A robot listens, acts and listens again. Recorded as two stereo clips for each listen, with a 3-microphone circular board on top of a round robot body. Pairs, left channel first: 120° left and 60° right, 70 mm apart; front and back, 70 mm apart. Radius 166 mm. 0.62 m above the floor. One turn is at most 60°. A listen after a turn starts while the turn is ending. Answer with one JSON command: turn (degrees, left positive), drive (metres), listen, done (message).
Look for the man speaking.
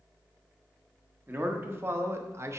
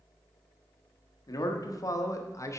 {"turn": -30}
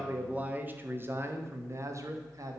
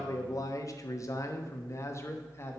{"turn": -45}
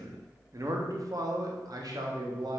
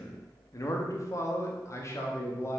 {"turn": -45}
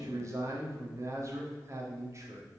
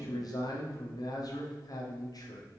{"turn": -15}
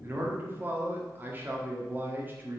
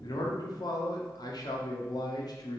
{"done": "Found it: a man speaking, straight ahead, 1 to 2 m away."}